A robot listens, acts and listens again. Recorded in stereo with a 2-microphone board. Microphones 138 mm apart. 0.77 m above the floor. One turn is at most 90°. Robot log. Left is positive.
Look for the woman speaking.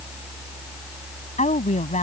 note: The woman speaking: about 50° left or 130° left.
cmd yaw +50
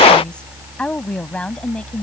end: Found it: a woman speaking, straight ahead.